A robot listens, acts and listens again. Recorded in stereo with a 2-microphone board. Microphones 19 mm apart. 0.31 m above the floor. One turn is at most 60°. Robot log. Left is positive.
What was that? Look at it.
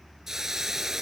note: The hiss: about 20° right or 160° right.
cmd yaw -20
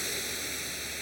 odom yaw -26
end: Facing the hiss.